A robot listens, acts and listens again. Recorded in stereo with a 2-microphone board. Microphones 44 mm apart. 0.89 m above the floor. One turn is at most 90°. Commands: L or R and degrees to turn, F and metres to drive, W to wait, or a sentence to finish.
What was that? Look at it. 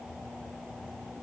W
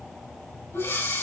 L90
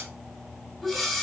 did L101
Facing the breathing, over 4 m away.